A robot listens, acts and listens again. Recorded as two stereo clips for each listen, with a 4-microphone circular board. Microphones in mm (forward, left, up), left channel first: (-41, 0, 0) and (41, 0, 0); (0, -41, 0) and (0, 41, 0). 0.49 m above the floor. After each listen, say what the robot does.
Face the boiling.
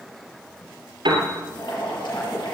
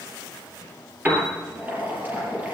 Turn 160° left.
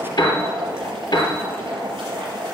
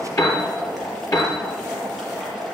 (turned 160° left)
Facing the boiling.